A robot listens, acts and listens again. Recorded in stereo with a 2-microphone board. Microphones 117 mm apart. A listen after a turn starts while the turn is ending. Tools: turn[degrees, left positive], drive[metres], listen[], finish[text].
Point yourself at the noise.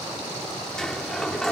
Action: turn[30]
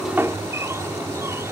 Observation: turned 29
Thought: So it is at 25° right.
Action: turn[-25]
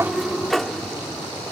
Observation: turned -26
Action: finish[Facing the sliding door.]